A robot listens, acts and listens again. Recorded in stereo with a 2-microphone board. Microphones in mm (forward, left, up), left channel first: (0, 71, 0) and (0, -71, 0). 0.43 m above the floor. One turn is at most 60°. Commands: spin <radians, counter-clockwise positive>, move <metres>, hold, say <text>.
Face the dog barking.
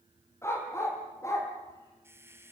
spin 0.35
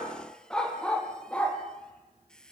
spin 0.52
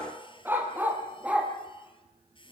spin -0.17
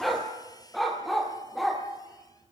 say Facing the dog barking, 2 to 4 m away.